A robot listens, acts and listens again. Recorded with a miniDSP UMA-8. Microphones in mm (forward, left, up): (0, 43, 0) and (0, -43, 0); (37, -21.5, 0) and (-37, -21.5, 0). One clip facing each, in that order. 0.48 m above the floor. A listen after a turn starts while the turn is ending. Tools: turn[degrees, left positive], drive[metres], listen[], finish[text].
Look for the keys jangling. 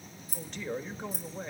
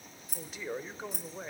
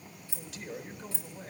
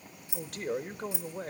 Thought: The keys jangling: 105° right.
Action: turn[-105]
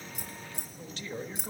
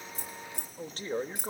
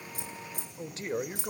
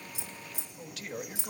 Thought: The keys jangling is now 25° left.
Action: turn[25]
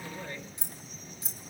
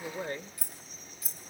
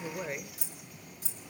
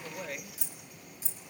Thought: The keys jangling is now 25° left.
Action: turn[25]
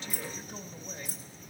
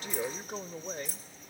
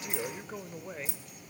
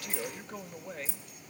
Thought: The keys jangling is now 20° left.
Action: turn[20]
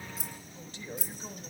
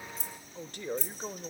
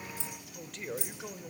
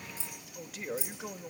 Thought: The keys jangling is now 10° left.
Action: turn[10]
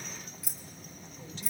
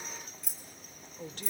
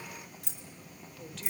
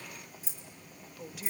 Action: finish[Found it: keys jangling, straight ahead.]